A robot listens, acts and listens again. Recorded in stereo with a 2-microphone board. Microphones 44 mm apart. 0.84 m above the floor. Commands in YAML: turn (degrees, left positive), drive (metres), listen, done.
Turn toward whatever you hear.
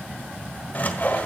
turn: 45
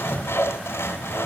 turn: 85
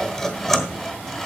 done: "Found it: sawing, straight ahead."